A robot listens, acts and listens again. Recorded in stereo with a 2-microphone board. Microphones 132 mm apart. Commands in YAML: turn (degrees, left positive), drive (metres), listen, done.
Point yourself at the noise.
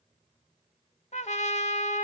turn: 60
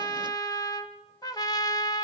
turn: 35
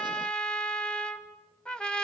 turn: 10
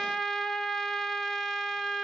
done: "Found it: a trumpet, straight ahead, 1 to 2 m away."